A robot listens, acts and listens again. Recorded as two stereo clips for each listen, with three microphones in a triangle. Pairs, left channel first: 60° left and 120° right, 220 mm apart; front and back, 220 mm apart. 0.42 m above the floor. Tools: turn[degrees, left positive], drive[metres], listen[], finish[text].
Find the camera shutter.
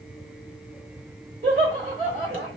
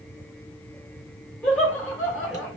Action: listen[]
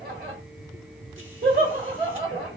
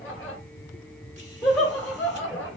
Action: listen[]
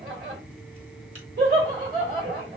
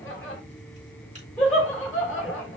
Action: finish[I can't make out a camera shutter to turn to.]